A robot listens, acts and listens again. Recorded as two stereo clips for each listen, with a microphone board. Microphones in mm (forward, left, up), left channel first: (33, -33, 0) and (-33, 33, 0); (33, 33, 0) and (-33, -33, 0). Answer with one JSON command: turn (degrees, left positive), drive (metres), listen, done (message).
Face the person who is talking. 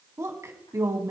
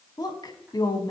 {"turn": 80}
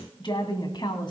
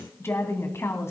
{"turn": -15}
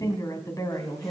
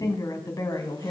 {"done": "Facing the woman speaking."}